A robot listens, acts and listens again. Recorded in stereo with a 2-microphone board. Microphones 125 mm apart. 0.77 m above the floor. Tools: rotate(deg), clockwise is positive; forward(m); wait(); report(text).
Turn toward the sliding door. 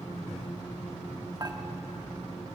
wait()
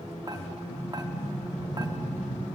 rotate(-70)
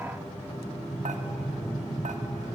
report("Facing the sliding door, 2 to 4 m away.")